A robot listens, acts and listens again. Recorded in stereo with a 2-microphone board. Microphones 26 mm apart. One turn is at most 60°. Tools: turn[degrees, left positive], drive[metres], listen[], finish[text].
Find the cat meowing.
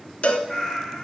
Thought: The cat meowing: about 25° left or 155° left.
Action: turn[25]
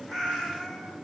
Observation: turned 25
Action: finish[Facing the cat meowing.]